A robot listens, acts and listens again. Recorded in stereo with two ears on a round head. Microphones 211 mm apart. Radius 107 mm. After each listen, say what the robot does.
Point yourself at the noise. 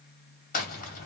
Turn 35° left.
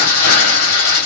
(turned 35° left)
Turn 115° left.
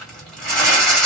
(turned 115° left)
Facing the crumpling.